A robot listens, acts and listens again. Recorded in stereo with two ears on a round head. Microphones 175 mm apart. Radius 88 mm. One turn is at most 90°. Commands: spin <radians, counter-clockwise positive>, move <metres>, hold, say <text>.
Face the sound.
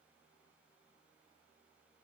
hold
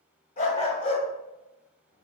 spin 0.61
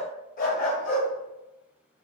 spin 0.79
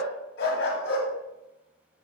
spin 1.57
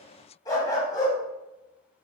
spin 0.35
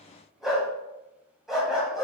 say Found it: a dog barking, straight ahead, 2 to 4 m away.